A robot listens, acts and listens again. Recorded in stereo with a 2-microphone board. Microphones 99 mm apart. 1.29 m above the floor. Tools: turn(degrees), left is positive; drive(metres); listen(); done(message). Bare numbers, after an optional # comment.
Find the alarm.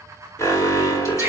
# The alarm: about 30° left or 150° left.
turn(30)
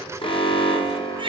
# So it is at 120° left.
turn(120)
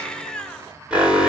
# The alarm is now 10° right.
turn(-10)
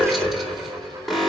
done("Found it: an alarm, straight ahead.")